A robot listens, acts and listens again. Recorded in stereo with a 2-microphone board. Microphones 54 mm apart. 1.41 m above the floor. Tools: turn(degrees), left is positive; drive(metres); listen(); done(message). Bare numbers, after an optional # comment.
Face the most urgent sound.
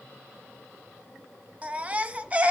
# The baby crying: about 25° right or 155° right.
turn(-25)
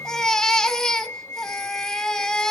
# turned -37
# So it is at 15° left.
turn(15)
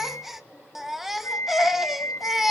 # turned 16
done("Found it: a baby crying, straight ahead, 1 to 2 m away.")